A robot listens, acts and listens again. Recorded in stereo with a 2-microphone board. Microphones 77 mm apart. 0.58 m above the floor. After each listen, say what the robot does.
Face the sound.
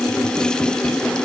Keep listening.
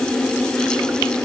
Keep listening.
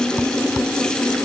I can't make out anything.